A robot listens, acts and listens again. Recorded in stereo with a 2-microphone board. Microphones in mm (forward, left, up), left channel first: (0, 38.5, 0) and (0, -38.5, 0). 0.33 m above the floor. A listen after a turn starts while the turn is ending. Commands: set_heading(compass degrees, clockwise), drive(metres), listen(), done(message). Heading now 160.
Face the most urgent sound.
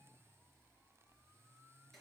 listen()
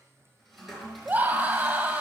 set_heading(180)
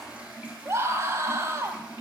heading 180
set_heading(315)
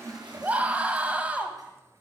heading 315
set_heading(340)
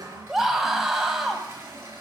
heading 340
done("Facing the scream.")